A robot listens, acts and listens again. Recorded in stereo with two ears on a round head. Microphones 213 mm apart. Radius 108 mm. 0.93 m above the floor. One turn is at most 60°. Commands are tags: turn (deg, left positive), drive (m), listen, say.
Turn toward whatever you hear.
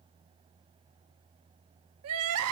<turn deg="-60"/>
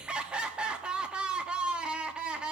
<say>Found it: crying, straight ahead.</say>